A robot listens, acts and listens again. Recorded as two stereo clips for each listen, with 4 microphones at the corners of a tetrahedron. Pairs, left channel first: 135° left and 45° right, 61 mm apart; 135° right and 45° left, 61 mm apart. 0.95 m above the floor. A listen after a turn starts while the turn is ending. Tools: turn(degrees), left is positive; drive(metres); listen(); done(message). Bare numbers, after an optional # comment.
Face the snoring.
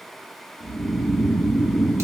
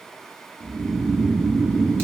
# The snoring: 80° left.
turn(80)
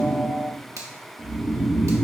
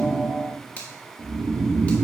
# The snoring is now 20° left.
turn(20)
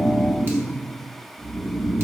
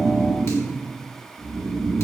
done("Facing the snoring.")